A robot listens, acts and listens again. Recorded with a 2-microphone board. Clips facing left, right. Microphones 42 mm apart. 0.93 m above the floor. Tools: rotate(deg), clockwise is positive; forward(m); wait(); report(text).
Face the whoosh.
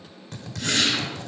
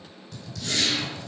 rotate(-50)
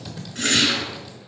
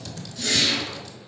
rotate(-70)
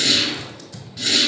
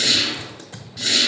report("Facing the whoosh.")